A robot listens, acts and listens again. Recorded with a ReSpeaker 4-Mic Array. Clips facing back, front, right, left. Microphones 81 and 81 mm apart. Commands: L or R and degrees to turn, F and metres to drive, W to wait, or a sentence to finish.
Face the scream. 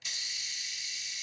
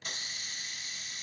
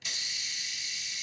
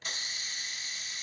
W
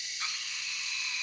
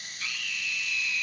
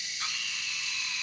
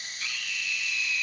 R130
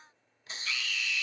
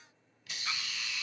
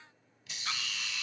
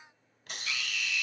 R50
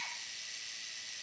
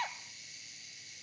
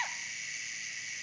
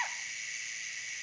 Found it: a scream, straight ahead, 1 to 2 m away.